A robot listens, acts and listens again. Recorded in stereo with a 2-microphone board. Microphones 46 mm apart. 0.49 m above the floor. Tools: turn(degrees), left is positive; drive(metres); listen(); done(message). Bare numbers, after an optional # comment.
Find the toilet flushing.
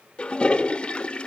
# The toilet flushing: about 25° left or 155° left.
turn(25)
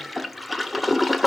done("Found it: a toilet flushing, straight ahead.")